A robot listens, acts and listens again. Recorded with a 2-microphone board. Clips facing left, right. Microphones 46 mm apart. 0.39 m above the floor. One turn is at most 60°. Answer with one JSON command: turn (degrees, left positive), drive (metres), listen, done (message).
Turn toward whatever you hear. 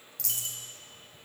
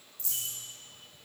{"turn": 60}
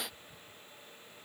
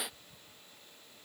{"listen": true}
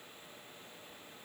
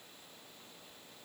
{"done": "I heard a dropped coin, but can't make it out now. It was about 10° left or 50° left."}